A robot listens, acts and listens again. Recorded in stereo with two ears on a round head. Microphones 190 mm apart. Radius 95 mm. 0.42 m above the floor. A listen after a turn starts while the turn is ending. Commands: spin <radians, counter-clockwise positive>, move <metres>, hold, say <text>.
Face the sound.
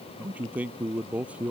spin -0.52
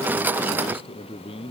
spin 0.44
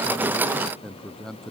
say Facing the man speaking.